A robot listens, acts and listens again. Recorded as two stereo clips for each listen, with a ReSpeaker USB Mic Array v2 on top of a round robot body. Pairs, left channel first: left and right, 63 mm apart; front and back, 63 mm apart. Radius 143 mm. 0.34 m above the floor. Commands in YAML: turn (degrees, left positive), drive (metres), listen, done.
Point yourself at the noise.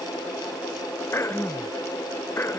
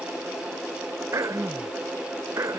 turn: 140
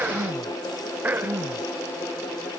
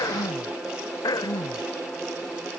turn: -25
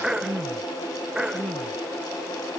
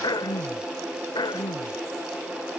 turn: -10
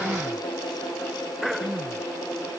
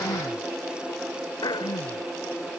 done: "Facing the throat clearing."